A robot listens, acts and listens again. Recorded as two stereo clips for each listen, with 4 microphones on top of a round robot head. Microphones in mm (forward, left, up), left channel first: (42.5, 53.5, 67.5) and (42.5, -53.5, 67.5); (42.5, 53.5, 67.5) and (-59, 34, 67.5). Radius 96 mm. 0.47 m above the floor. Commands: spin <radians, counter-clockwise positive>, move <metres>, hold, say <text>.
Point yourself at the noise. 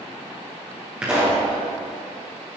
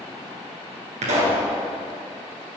spin -2.97
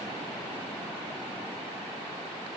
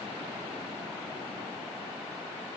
say I heard a pop from this way, but can't make it out now.